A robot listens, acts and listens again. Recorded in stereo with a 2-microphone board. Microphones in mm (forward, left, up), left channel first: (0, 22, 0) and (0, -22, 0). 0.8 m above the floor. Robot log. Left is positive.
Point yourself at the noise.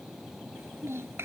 note: The child speaking: about 70° right or 110° right.
cmd yaw -70
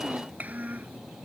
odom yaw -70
note: So it is at 40° right.
cmd yaw -40
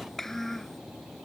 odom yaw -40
note: The child speaking is now 10° left.
cmd yaw +10
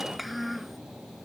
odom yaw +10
end: Facing the child speaking.